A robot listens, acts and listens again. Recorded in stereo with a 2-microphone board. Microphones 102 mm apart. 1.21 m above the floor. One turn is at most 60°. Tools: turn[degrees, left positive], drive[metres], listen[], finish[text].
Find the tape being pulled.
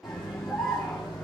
Action: listen[]
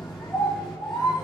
Action: listen[]
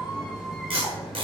Thought: The tape being pulled: about 65° right or 115° right.
Action: turn[-60]
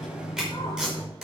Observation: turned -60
Action: finish[Found it: tape being pulled, straight ahead, over 4 m away.]